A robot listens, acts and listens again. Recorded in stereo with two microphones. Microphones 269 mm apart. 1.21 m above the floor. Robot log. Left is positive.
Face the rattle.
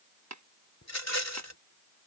note: The rattle: about 70° left or 110° left.
cmd yaw +70
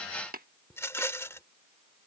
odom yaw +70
note: So it is at 10° left.
cmd yaw +10
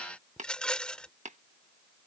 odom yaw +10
end: Facing the rattle.